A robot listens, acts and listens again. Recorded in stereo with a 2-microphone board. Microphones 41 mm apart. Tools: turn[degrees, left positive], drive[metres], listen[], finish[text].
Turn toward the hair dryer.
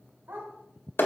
Action: listen[]
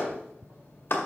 Action: listen[]
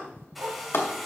Action: turn[30]
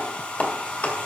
Thought: So it is at 150° left.
Action: turn[150]
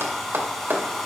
Action: finish[Facing the hair dryer, 2 to 4 m away.]